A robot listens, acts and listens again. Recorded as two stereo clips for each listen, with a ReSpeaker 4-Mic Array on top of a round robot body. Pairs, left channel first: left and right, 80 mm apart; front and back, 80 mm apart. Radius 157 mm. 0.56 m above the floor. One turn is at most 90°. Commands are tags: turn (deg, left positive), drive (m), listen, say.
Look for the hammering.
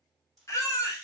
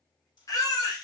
<listen/>
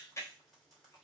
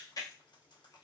<listen/>
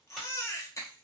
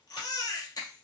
<say>I can't make out hammering, only frying and a baby crying.</say>